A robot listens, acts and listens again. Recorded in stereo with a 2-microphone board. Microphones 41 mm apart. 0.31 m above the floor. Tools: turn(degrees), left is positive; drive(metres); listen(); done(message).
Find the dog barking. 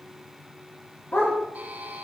turn(degrees=90)
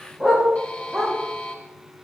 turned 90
done("Found it: a dog barking, straight ahead.")